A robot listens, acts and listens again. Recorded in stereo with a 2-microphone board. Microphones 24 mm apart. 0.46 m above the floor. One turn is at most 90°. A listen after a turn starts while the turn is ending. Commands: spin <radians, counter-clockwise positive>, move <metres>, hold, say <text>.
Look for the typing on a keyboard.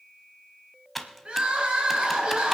spin 0.52
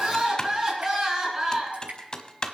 spin 1.57
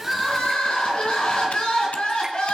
spin 0.96
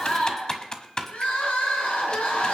spin 0.61
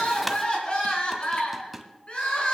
say Facing the typing on a keyboard.